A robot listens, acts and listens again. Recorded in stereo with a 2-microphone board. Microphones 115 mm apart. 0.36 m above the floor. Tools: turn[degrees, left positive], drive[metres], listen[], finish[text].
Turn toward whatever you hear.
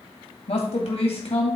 Thought: The man speaking: about 65° left or 115° left.
Action: turn[65]
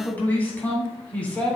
Thought: So it is at 10° left.
Action: turn[10]
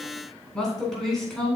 Action: finish[Found it: a man speaking, straight ahead.]